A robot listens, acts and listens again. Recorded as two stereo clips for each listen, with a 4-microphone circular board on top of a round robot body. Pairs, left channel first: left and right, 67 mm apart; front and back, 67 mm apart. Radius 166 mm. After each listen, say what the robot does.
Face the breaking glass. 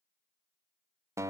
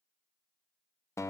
Keep listening.
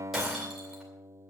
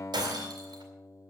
Turn 180° left.
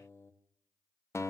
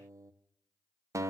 I heard breaking glass from this way, but can't make it out now.